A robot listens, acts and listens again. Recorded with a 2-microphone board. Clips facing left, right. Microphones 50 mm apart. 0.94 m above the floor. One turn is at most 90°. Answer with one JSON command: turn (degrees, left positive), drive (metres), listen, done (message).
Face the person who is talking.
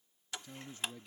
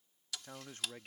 {"turn": -55}
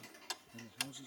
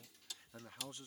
{"turn": -65}
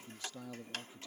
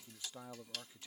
{"turn": -25}
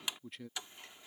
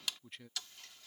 {"done": "Facing the man speaking."}